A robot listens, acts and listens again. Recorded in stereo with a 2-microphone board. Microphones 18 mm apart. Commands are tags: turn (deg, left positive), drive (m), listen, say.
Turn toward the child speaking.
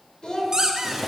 <turn deg="60"/>
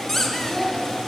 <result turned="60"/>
<turn deg="40"/>
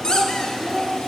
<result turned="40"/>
<turn deg="-10"/>
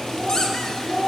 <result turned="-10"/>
<turn deg="-15"/>
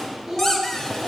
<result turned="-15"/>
<say>Found it: a child speaking, straight ahead, 1 to 2 m away.</say>